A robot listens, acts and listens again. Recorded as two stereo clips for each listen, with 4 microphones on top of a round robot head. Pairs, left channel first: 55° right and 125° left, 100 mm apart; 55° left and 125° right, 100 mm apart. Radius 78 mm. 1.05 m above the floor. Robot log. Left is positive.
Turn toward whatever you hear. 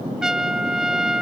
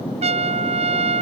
note: The trumpet: 150° right.
cmd yaw -150
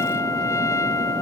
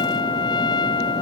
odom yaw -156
end: Facing the trumpet.